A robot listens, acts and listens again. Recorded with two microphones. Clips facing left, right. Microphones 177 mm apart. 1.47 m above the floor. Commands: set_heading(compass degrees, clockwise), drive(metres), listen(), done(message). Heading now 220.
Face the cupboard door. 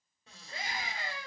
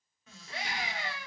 set_heading(185)
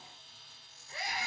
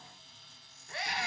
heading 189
set_heading(74)
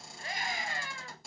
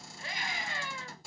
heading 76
done("Facing the cupboard door.")